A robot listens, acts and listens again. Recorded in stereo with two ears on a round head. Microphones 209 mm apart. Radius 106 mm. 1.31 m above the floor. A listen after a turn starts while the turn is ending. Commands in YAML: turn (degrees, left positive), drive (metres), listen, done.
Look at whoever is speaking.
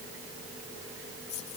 listen: true
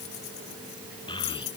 turn: 20
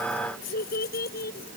turn: 135
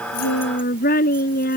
turn: 40
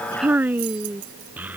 done: "Found it: a child speaking, straight ahead."